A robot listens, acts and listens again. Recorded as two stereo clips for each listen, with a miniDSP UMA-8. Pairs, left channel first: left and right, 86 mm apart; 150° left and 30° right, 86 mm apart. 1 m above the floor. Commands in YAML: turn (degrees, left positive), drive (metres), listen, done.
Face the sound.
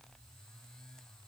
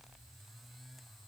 listen: true
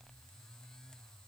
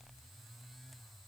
listen: true
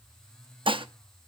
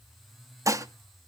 turn: -80
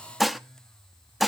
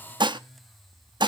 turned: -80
done: "Facing the dishes clattering."